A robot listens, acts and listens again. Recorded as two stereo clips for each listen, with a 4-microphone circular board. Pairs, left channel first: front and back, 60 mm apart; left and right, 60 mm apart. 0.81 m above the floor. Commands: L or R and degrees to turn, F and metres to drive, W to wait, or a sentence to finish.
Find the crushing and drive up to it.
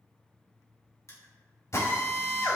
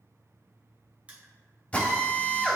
R25
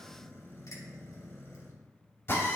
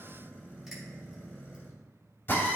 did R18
W
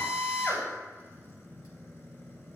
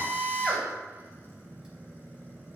W
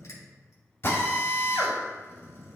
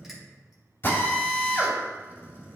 I heard crushing from this way, but can't make it out now. I did not reach it.